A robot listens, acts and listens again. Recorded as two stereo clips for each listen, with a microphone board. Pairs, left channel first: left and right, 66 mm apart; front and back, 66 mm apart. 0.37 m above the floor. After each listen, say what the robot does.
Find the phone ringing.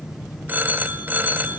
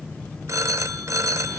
Turn 145° right.
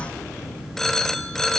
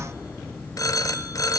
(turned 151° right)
Found it: a phone ringing, straight ahead, under 1 m away.